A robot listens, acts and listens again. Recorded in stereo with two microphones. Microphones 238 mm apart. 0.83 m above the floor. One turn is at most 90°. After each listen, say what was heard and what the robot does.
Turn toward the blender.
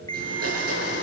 Turn 90° right.
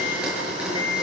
Facing the blender.